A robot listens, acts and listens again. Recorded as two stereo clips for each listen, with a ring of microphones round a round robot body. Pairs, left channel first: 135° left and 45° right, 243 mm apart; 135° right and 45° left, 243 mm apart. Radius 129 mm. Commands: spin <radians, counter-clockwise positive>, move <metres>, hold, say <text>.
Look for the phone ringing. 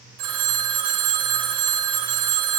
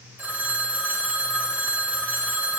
spin -0.70
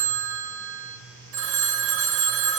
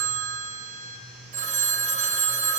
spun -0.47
spin -0.26
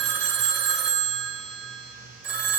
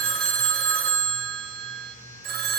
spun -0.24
say Facing the phone ringing.